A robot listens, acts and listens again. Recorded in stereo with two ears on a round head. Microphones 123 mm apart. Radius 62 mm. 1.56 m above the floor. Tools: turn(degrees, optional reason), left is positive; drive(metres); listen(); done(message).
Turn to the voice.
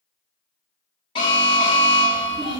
turn(degrees=-40, reason="The child speaking: about 40° right or 140° right.")
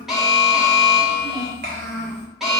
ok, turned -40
turn(degrees=-100, reason="So it is at 100° right.")
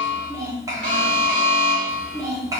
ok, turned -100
turn(degrees=-25, reason="The child speaking is now 25° right.")
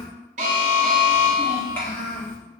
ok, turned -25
turn(degrees=15, reason="The child speaking is now 15° left.")
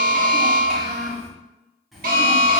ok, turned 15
done("Facing the child speaking, 1 to 2 m away.")